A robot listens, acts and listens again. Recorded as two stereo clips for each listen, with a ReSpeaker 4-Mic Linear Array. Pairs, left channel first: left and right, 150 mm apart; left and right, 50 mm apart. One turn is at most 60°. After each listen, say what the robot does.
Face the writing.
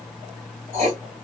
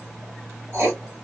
Turn 50° right.
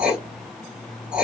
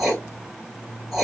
Turn 10° right.
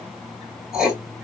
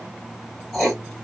Found it: writing, straight ahead.